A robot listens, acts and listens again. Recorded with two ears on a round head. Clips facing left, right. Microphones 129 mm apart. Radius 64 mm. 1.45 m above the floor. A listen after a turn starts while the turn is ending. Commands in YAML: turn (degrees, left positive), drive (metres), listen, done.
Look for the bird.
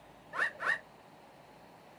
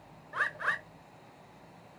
turn: 30
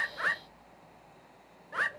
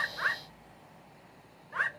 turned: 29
turn: 135
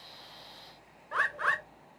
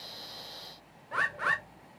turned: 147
turn: -10
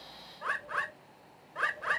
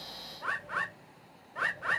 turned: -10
done: "Facing the bird, under 1 m away."